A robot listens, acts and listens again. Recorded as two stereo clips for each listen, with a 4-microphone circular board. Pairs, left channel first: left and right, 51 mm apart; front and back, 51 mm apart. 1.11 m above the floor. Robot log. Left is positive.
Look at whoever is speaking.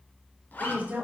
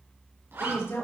note: The woman speaking: 30° right.
cmd yaw -30
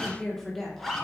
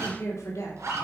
end: Found it: a woman speaking, straight ahead, 2 to 4 m away.